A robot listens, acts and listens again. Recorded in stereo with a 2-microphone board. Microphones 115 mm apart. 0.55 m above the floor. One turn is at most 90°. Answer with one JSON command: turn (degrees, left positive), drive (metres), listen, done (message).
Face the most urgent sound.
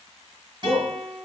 {"turn": 50}
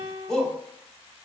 {"done": "Facing the shout, 1 to 2 m away."}